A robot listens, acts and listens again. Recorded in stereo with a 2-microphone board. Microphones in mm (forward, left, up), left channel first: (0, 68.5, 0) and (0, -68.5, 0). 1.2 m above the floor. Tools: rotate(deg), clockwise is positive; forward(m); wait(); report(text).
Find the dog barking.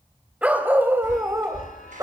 rotate(25)
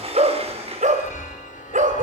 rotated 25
rotate(105)
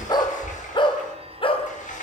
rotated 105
rotate(-45)
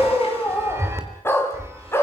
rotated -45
rotate(-20)
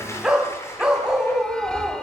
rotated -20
report("Facing the dog barking.")